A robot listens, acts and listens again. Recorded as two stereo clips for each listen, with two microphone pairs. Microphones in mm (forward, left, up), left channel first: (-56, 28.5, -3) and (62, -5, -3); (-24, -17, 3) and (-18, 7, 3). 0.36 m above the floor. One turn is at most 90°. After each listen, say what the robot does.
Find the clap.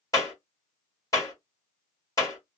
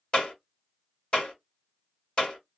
Turn 90° right.
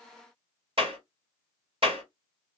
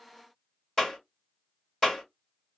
Turn 45° right.
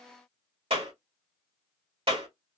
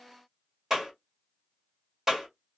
Found it: a clap, straight ahead.